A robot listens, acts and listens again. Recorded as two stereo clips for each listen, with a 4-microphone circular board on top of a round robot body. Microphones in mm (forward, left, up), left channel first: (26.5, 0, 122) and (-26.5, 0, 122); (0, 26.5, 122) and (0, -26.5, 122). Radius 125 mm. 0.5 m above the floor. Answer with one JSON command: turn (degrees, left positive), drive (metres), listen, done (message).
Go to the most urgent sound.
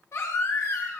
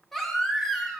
{"drive": 1.0}
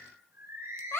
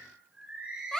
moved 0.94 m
{"turn": 10}
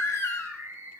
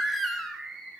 {"drive": 1.0}
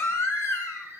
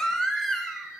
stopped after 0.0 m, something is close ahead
{"turn": 10}
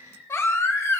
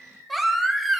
{"done": "Arrived at the baby crying, straight ahead."}